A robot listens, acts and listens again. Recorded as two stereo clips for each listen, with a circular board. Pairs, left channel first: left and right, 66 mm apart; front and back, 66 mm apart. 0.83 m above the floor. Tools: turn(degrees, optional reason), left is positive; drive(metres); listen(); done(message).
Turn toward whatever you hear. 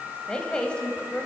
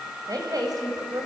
turn(degrees=165, reason="The woman speaking: 165° left.")
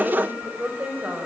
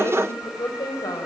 turn(degrees=-20, reason="The woman speaking is now 20° right.")
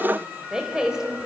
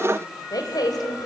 turn(degrees=-10, reason="The woman speaking is now 10° right.")
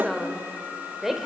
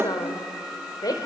done("Found it: a woman speaking, straight ahead, 2 to 4 m away.")